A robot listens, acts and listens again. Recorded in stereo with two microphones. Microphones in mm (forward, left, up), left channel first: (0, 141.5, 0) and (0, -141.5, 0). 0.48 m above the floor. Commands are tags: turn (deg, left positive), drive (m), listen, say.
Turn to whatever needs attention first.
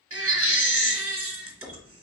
<turn deg="-50"/>
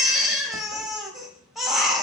<say>Facing the baby crying.</say>